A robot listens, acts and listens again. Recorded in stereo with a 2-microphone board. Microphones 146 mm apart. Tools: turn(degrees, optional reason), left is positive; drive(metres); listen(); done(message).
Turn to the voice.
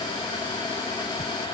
listen()
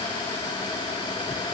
listen()
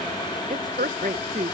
turn(degrees=-75, reason="The woman speaking: about 75° right or 105° right.")
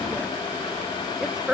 done("Facing the woman speaking.")